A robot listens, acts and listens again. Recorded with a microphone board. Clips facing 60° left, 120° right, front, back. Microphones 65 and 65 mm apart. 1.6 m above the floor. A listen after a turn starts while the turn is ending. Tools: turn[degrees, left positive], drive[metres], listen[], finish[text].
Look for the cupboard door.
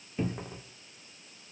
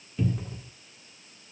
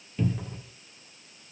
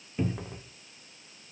Thought: The cupboard door: 115° left.
Action: turn[115]
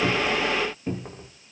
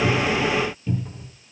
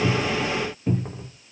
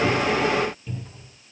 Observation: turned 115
Thought: The cupboard door is now 25° left.
Action: turn[25]
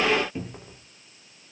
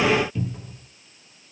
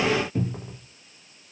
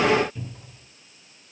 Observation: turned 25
Action: finish[Found it: a cupboard door, straight ahead, 2 to 4 m away.]